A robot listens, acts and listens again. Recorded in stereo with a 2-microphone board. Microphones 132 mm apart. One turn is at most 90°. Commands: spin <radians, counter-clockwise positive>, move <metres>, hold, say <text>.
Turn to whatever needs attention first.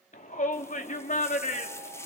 spin 1.57
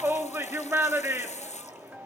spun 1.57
spin -0.26
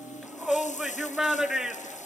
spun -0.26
say Facing the shout, 2 to 4 m away.